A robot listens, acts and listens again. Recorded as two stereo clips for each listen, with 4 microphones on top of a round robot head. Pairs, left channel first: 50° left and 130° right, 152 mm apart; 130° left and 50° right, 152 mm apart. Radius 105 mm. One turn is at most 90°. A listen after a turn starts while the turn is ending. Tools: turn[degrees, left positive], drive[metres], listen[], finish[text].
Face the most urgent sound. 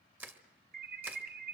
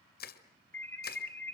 Thought: The alarm: 155° right.
Action: turn[-90]
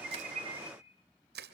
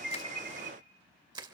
Thought: Nothing new. It was at 65° right.
Action: turn[-65]
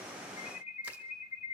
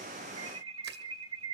Action: finish[Facing the alarm.]